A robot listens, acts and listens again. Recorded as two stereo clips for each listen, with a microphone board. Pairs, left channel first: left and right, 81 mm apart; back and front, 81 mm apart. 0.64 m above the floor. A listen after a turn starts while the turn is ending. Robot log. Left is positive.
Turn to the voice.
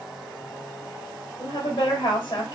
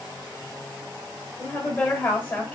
note: The woman speaking: 115° left.
cmd yaw +115
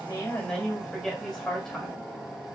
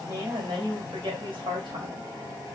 end: Facing the woman speaking, 2 to 4 m away.